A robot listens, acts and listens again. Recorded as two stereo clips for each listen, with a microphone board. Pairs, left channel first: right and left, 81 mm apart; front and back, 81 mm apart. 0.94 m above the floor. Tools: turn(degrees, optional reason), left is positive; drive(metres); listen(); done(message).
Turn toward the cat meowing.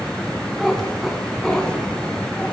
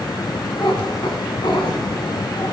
turn(degrees=-10, reason="The cat meowing: 10° right.")
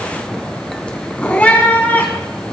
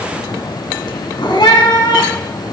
turn(degrees=-20, reason="The cat meowing is now 20° right.")
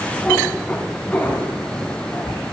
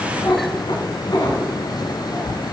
turn(degrees=-20, reason="The cat meowing is now 20° right.")
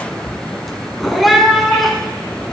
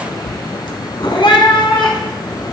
done("Found it: a cat meowing, straight ahead.")